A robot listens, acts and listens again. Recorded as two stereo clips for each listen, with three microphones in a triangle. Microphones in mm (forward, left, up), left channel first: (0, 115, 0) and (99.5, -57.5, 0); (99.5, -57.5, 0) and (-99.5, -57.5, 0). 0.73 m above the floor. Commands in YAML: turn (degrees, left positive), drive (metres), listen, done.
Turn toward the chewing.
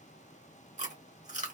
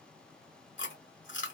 done: "Found it: chewing, straight ahead, 1 to 2 m away."